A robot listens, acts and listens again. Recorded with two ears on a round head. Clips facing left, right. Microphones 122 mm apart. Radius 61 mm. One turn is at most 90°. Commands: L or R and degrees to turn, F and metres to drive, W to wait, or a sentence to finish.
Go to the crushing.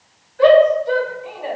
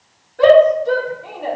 W
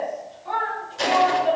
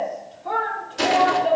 R75
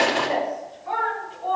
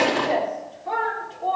F1.0
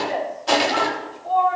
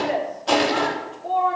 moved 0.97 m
F1.0
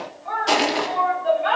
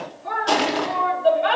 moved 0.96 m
F1.0
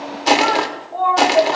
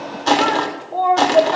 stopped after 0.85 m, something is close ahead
L15
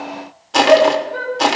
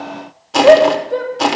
Arrived at the crushing, straight ahead.